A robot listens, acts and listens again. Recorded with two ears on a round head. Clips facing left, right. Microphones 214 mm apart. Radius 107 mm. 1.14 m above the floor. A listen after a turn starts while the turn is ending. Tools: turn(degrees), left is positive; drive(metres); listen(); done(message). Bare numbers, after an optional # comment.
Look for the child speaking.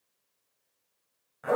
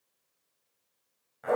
listen()
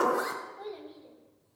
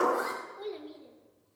# The child speaking: about 35° right or 145° right.
turn(-35)
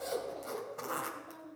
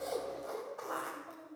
# So it is at 15° left.
turn(15)
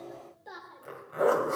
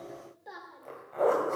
done("Found it: a child speaking, straight ahead.")